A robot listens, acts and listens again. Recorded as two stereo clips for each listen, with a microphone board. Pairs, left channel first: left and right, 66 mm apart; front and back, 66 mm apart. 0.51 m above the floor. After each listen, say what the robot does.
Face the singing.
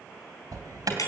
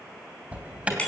Keep listening.
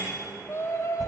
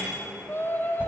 Turn 55° left.
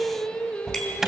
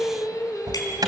Turn 20° left.
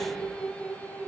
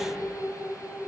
Turn 25° left.
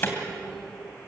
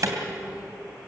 Keep listening.
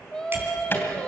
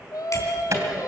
Turn 15° left.
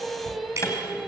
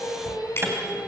Facing the singing, 2 to 4 m away.